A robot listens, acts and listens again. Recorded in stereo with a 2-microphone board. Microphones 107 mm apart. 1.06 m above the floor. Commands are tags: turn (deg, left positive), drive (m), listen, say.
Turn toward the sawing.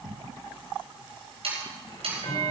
<turn deg="-65"/>
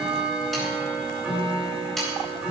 <say>Facing the sawing, over 4 m away.</say>